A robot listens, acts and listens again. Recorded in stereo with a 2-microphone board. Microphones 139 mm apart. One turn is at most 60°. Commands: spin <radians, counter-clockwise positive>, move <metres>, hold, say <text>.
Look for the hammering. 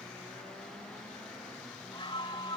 hold
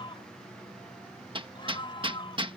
spin -0.70
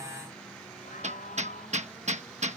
spin -1.05
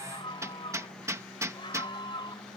spin -0.44
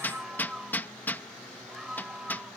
spin 0.26
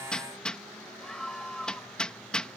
say Found it: hammering, straight ahead.